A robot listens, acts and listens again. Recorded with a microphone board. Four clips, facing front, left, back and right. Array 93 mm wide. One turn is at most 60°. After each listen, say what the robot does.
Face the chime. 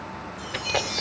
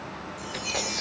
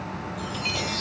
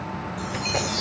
Turn 60° left.
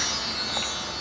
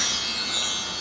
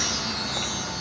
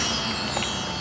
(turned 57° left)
Turn 60° left.
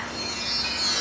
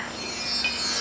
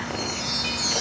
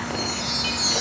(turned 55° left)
Turn 40° left.
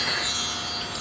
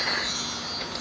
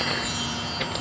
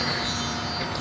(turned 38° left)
Found it: a chime, straight ahead, over 4 m away.